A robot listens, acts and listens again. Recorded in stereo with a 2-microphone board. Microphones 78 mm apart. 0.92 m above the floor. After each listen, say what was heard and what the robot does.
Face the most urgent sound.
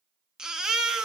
Turn 30° right.
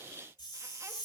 Keep listening.
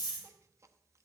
Keep listening.
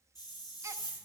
I heard a baby crying, but can't make it out now. It was about 20° left or 140° right.